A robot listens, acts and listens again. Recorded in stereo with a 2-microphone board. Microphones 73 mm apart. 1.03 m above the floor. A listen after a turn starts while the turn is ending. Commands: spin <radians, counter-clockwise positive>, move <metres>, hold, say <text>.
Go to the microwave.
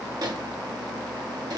spin -1.05
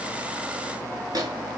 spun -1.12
spin -0.96
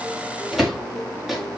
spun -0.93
move 1.0
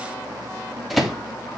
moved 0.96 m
move 1.0
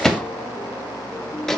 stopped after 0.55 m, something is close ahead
spin 0.17
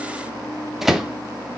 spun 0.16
say Arrived at the microwave, straight ahead.